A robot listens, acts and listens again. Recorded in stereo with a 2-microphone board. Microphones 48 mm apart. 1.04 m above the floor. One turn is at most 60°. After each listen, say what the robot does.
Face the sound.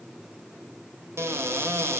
Turn 60° right.
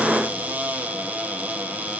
Turn 35° right.
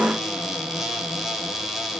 Found it: a cupboard door, straight ahead, 1 to 2 m away.